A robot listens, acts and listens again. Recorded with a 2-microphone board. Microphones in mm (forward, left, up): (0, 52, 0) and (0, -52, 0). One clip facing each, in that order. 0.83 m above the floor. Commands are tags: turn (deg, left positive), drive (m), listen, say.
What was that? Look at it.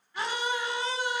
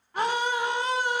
<turn deg="-55"/>
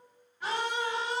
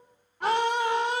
<turn deg="-70"/>
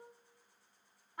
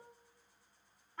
<turn deg="15"/>
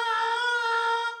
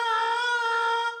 <say>Facing the scream.</say>